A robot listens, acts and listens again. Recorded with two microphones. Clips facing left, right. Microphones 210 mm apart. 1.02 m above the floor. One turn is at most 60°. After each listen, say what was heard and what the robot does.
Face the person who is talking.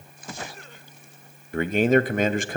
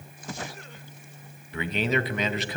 The man speaking: about 50° left or 130° left. Turn 50° left.
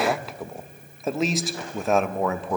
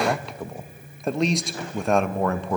Found it: a man speaking, straight ahead, under 1 m away.